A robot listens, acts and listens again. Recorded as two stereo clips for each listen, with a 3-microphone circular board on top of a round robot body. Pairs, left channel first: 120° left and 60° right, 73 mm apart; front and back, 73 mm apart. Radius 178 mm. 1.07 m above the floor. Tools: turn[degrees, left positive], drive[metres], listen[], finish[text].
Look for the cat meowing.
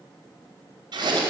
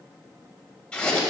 Action: listen[]
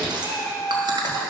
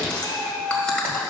Thought: The cat meowing: 155° left.
Action: turn[155]
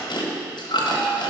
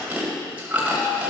Action: listen[]
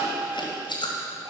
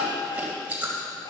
Thought: The cat meowing is now 20° right.
Action: turn[-20]
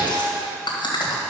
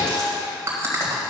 Action: listen[]
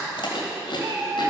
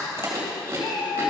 Action: finish[Facing the cat meowing.]